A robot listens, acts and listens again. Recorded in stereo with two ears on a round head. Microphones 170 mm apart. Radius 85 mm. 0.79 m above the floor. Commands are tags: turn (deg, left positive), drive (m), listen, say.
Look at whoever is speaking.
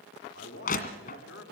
<turn deg="65"/>
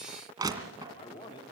<turn deg="30"/>
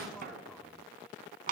<listen/>
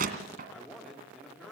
<say>Found it: a man speaking, straight ahead.</say>